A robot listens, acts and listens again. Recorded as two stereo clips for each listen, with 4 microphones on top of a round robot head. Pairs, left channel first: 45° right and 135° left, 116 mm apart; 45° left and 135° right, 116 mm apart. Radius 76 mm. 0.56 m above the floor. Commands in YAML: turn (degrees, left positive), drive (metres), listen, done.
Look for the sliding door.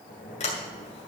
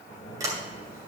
turn: -70
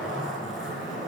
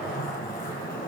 listen: true
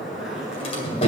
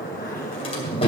done: "Found it: a sliding door, straight ahead, 2 to 4 m away."